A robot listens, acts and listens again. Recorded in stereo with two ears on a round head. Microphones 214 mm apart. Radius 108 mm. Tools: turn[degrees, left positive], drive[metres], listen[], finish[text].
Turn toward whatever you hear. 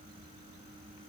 Action: listen[]
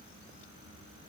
Action: listen[]
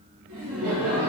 Thought: The laughter: about 55° right or 125° right.
Action: turn[-55]
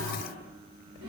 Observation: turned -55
Thought: So it is at 65° right.
Action: turn[-65]
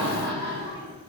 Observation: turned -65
Thought: The laughter is now 35° right.
Action: turn[-35]
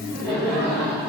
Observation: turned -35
Action: finish[Found it: laughter, straight ahead.]